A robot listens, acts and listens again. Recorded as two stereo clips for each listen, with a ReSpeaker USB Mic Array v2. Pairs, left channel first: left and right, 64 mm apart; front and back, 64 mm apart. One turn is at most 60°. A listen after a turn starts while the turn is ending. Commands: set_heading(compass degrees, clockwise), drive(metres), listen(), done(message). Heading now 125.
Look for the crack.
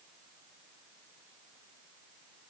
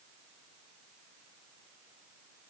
listen()
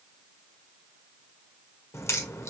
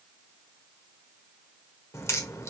set_heading(80)
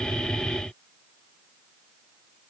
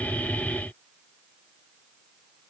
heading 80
done("Facing where the crack came from. I can't hear it now.")